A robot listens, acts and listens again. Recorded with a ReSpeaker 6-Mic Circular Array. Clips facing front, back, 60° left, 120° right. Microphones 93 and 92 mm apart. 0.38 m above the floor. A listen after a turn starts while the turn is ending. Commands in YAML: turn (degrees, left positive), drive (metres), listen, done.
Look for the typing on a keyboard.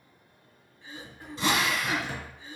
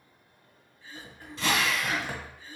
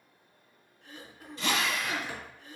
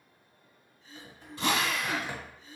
turn: -170
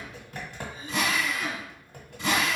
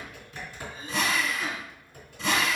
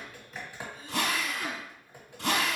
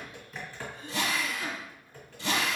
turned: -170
turn: -10
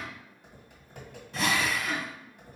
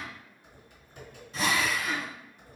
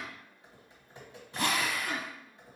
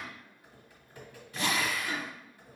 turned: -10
done: "Facing the typing on a keyboard, 1 to 2 m away."